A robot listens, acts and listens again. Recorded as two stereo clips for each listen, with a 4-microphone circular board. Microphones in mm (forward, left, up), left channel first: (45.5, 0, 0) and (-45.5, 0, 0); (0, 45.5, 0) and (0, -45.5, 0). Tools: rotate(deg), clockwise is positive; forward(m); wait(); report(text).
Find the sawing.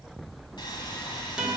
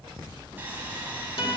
rotate(25)
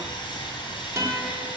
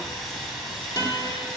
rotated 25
report("Facing the sawing.")